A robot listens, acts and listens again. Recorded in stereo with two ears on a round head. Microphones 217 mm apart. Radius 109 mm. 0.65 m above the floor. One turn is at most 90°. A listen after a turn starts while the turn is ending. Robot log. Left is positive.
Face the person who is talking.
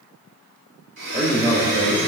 note: The man speaking: about 35° right or 145° right.
cmd yaw -35
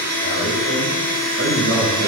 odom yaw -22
note: The man speaking: about 45° right or 135° right.
cmd yaw -45
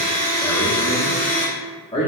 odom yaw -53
note: So it is at 20° left.
cmd yaw +20
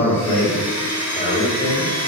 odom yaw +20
note: The man speaking is now 15° left.
cmd yaw +15
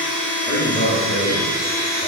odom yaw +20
end: Found it: a man speaking, straight ahead, 1 to 2 m away.